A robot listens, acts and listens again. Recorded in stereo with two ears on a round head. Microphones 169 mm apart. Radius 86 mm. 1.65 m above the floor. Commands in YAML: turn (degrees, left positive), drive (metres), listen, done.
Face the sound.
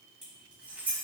turn: -30
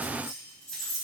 turn: 30
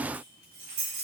turn: -40
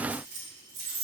turn: -30
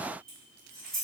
done: "Found it: keys jangling, straight ahead, 2 to 4 m away."